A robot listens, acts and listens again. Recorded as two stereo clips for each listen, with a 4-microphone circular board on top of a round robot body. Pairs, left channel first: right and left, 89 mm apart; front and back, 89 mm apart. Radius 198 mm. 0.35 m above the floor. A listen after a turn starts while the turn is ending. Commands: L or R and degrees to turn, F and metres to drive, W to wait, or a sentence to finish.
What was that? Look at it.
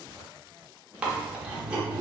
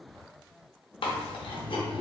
L10
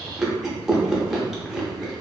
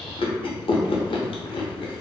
Facing the chewing, under 1 m away.